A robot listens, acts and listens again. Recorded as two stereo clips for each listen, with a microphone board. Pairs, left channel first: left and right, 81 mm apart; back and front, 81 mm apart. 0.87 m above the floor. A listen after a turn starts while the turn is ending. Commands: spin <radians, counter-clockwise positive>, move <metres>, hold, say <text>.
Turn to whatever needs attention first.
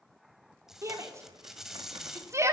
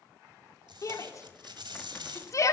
spin -2.44
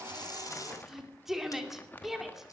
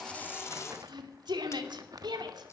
say Found it: a shout, straight ahead.